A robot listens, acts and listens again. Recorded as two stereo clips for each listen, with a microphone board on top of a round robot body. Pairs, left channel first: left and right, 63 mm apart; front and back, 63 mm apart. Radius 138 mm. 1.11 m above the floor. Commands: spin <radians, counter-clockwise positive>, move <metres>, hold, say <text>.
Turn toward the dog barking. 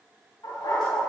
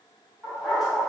spin 1.75
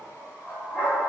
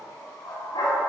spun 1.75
spin 0.52
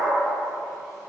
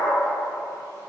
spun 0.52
say Facing the dog barking.